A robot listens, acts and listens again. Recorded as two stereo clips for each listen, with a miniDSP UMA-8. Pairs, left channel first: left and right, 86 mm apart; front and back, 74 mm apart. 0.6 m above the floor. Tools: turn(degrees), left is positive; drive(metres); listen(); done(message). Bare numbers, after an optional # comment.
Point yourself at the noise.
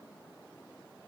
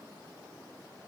listen()
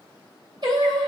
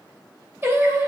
# The singing: 120° right.
turn(-120)
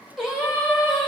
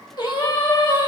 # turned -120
done("Found it: singing, straight ahead, 2 to 4 m away.")